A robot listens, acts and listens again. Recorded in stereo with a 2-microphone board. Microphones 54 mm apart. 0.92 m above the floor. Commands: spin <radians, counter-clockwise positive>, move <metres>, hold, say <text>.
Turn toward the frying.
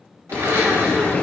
spin 0.61
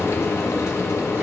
spin 1.92
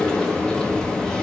spin 0.26
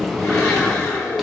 say Found it: frying, straight ahead, 1 to 2 m away.